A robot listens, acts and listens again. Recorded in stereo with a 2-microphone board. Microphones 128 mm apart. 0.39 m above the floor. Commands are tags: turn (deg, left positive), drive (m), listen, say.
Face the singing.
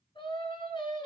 <turn deg="40"/>
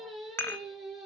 <say>Facing the singing, 2 to 4 m away.</say>